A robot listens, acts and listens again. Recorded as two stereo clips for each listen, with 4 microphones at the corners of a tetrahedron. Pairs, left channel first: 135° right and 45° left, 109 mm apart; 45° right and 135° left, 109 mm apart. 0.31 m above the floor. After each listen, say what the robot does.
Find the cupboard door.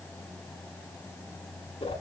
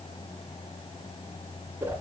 Keep listening.
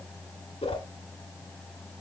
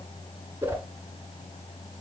Keep listening.
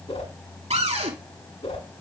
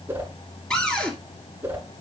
Turn 40° left.
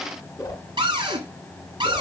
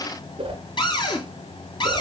Found it: a cupboard door, straight ahead, 2 to 4 m away.